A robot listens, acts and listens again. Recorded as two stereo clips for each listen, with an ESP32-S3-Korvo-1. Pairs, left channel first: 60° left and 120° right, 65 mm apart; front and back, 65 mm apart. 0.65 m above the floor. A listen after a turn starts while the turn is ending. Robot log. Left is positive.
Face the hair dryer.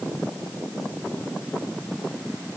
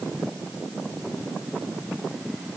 cmd idle
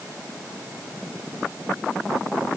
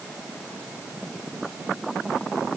cmd idle
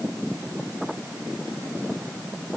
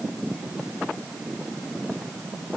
end: I can't make out a hair dryer to turn to.